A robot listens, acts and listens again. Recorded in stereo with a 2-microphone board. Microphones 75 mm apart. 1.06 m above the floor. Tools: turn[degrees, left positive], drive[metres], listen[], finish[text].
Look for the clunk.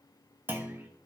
Thought: The clunk: about 25° right or 155° right.
Action: turn[-25]
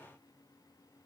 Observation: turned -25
Action: listen[]
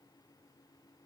Action: finish[I heard a clunk, but can't make it out now. It was about straight ahead or 130° right.]